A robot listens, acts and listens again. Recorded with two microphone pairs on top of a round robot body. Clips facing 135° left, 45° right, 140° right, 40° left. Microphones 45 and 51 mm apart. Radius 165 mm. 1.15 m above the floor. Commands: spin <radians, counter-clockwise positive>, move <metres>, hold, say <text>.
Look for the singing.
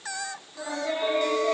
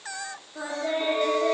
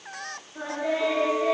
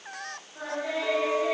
spin -1.31
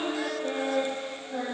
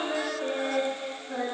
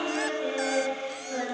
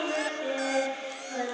spin -0.70
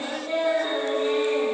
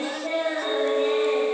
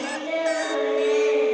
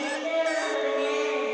spin -0.44
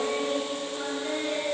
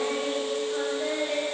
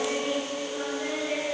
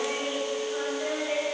spin -0.44
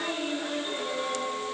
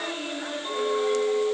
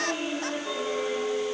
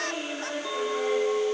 spin 0.35
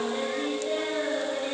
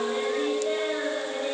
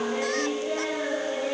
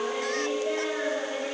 say Found it: singing, straight ahead.